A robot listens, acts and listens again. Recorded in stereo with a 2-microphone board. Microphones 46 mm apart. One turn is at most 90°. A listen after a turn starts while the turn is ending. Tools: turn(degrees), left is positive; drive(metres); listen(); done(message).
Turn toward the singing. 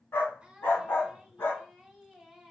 turn(degrees=-30)
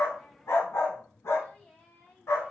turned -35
turn(degrees=45)
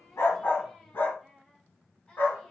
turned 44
turn(degrees=20)
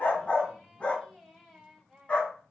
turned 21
done("Facing the singing, 2 to 4 m away.")